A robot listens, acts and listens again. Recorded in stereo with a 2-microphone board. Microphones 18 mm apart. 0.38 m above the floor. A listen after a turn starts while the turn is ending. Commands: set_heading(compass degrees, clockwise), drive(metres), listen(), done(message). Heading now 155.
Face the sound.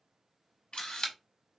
set_heading(65)
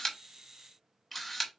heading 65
done("Found it: a camera shutter, straight ahead, under 1 m away.")